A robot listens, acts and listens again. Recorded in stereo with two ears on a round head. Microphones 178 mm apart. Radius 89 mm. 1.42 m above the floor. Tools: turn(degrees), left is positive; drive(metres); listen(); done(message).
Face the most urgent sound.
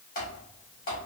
listen()
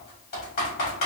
listen()
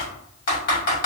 done("I can't make out anything urgent to turn to.")